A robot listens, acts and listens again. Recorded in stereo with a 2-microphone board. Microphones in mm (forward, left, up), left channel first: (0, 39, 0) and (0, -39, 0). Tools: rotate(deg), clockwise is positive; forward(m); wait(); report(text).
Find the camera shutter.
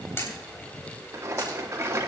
rotate(-35)
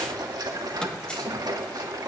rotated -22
wait()
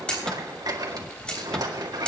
rotate(-15)
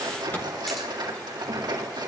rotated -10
wait()
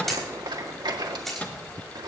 report("Found it: a camera shutter, straight ahead, 2 to 4 m away.")